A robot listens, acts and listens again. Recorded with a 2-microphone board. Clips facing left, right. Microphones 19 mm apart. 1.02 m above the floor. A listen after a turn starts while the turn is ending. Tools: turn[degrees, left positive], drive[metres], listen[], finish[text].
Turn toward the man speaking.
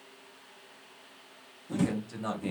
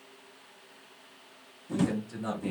Thought: The man speaking: about 15° left or 165° left.
Action: turn[15]
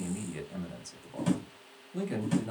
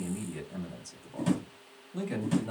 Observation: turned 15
Action: turn[-30]
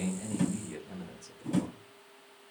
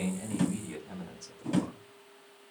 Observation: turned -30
Thought: So it is at 135° right.
Action: turn[-135]
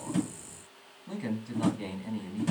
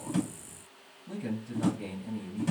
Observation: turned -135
Thought: The man speaking is now 40° left.
Action: turn[40]
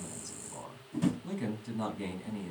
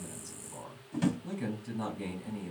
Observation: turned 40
Action: finish[Facing the man speaking, 1 to 2 m away.]